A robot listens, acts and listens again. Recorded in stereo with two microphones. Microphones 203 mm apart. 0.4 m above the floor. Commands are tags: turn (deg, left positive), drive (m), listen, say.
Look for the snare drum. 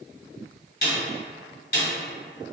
<turn deg="50"/>
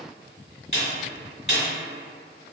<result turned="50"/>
<turn deg="70"/>
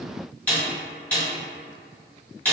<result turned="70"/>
<turn deg="10"/>
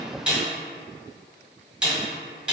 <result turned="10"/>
<say>Facing the snare drum.</say>